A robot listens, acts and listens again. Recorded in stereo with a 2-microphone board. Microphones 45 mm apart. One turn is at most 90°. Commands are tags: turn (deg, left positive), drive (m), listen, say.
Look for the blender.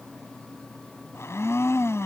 <turn deg="90"/>
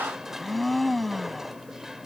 <say>Found it: a blender, straight ahead.</say>